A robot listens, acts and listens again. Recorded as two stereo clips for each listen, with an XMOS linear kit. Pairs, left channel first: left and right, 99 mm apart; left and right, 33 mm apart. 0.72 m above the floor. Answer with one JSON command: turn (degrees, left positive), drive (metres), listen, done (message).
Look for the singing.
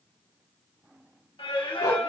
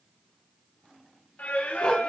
{"turn": 65}
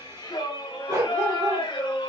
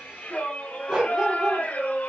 {"turn": 55}
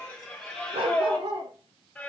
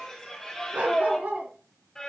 {"turn": 10}
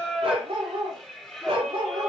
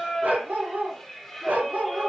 {"done": "Facing the singing, 2 to 4 m away."}